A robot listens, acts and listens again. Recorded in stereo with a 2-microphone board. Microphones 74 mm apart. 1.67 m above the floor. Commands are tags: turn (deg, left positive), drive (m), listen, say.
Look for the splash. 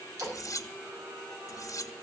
<turn deg="-50"/>
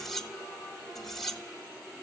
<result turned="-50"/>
<listen/>
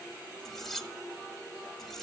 <say>I heard a splash, but can't make it out now. It was about straight ahead or 80° right.</say>